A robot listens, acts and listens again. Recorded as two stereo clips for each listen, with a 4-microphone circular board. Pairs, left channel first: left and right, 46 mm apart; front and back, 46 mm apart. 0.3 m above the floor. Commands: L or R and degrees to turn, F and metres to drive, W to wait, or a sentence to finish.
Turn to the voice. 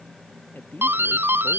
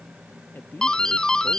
L45
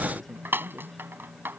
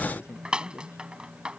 Facing the man speaking.